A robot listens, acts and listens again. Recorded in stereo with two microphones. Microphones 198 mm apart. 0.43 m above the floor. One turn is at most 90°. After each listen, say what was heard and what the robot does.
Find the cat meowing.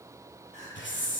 Keep listening.
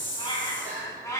Turn 30° left.
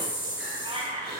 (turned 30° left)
So it is at 35° right. Turn 35° right.
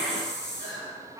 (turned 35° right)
The cat meowing is now 20° right. Turn 20° right.
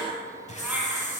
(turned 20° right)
Keep listening.
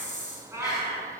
The cat meowing is now 15° right. Turn 15° right.
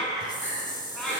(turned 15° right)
Found it: a cat meowing, straight ahead, 2 to 4 m away.